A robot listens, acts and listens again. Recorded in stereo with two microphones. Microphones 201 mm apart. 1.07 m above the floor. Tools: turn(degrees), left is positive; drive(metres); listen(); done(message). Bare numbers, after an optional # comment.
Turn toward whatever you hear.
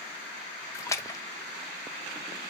# The splash: about 15° left or 165° left.
turn(15)
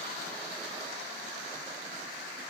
listen()
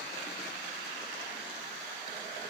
done("I heard a splash, but can't make it out now. It was about straight ahead or 150° left.")